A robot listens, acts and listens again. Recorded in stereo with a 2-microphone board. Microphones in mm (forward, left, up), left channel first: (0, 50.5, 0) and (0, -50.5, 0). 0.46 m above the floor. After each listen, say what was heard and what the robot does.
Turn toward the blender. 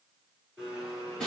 Turn 30° right.
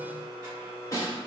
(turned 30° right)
So it is at 145° right. Turn 145° right.
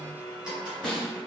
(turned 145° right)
The blender is now 10° right. Turn 10° right.
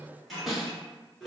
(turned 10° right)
Facing the blender, 1 to 2 m away.